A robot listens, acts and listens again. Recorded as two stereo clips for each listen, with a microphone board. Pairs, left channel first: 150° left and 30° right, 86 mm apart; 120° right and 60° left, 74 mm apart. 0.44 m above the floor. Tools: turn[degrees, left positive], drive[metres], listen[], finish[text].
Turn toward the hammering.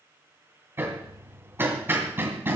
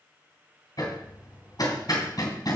Thought: The hammering: 95° right.
Action: turn[-95]
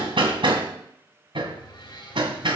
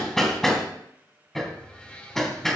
Thought: The hammering is now 35° right.
Action: turn[-35]
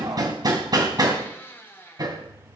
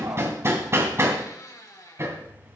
Thought: The hammering is now 10° left.
Action: turn[10]
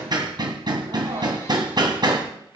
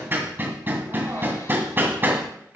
Action: finish[Found it: hammering, straight ahead, 2 to 4 m away.]